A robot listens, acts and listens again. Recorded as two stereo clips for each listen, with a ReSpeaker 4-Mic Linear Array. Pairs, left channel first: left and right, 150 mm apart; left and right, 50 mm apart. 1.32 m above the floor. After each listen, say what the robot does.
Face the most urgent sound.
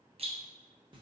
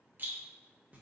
Keep listening.
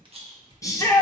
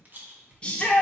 Turn 20° left.
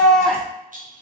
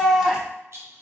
Found it: a shout, straight ahead, under 1 m away.